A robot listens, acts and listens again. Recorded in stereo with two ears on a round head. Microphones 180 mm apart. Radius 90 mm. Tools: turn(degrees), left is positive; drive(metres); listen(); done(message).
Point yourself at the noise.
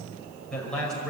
turn(degrees=30)
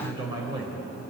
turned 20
turn(degrees=-25)
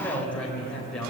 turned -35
done("Found it: a man speaking, straight ahead, over 4 m away.")